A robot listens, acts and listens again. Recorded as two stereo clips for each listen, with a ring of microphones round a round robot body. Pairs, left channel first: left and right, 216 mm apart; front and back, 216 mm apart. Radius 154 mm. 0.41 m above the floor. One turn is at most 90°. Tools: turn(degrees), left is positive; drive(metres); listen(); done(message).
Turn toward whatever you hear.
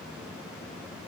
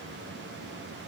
listen()
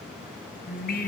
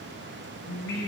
turn(degrees=45)
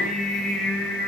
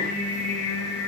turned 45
done("Facing the singing.")